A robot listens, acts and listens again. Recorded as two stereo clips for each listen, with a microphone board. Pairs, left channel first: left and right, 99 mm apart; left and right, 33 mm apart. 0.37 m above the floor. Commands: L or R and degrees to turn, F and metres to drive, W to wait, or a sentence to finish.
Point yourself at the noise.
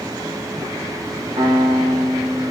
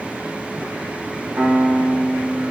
R70
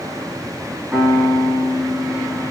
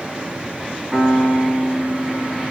Found it: a piano, straight ahead.